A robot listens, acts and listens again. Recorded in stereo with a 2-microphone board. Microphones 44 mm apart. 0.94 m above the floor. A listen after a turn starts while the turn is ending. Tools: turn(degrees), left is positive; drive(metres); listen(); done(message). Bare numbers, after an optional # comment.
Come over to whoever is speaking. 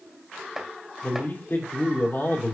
# The man speaking: about 65° left or 115° left.
turn(65)
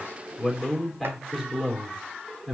drive(1.0)
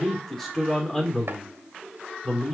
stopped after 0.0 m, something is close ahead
done("Something is in my way. I am facing the man speaking but have not reached it.")